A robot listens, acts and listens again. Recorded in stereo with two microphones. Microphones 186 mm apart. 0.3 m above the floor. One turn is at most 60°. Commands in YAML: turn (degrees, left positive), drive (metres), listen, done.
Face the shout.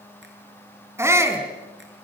turn: -30
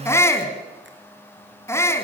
turn: 15
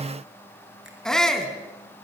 done: "Facing the shout."